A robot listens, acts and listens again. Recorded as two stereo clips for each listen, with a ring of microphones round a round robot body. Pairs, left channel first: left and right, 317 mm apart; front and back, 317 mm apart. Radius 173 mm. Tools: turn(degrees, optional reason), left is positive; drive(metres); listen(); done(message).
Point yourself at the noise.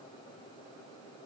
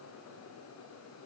listen()
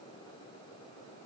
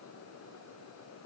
listen()
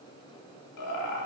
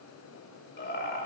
turn(degrees=55, reason="The laughter: 55° left.")
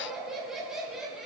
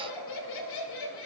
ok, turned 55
done("Found it: laughter, straight ahead, 2 to 4 m away.")